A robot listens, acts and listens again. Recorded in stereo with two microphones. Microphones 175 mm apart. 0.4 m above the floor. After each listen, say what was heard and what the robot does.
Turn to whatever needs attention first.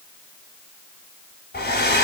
Keep listening.
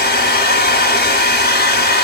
Keep listening.
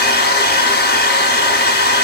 I can't make out anything urgent to turn to.